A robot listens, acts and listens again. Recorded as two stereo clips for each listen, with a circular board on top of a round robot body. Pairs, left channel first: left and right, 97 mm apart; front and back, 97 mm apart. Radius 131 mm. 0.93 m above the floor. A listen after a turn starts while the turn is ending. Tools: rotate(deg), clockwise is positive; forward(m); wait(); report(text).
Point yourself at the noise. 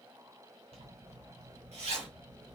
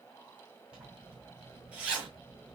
rotate(100)
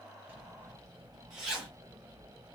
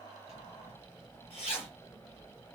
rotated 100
report("Found it: a zipper, straight ahead, 2 to 4 m away.")